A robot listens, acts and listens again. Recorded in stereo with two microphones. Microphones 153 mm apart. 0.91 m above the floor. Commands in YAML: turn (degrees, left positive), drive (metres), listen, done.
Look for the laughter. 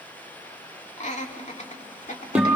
turn: 50
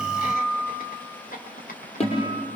turn: 70
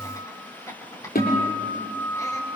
turn: 20
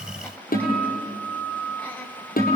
listen: true
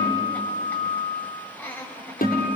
turn: 10
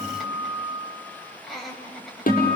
done: "Facing the laughter."